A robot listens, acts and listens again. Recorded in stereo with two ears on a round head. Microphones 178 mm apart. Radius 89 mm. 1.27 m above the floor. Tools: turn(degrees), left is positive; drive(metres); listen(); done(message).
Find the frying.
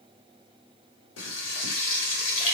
turn(degrees=65)
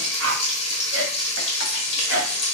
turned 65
turn(degrees=35)
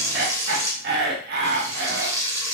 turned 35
turn(degrees=-20)
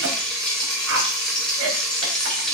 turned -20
done("Found it: frying, straight ahead, 1 to 2 m away.")